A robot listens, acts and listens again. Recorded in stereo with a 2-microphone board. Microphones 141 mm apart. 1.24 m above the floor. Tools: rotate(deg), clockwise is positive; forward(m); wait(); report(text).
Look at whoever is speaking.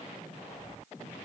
wait()
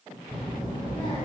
rotate(90)
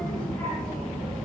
rotate(-10)
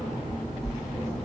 report("Facing the child speaking, 1 to 2 m away.")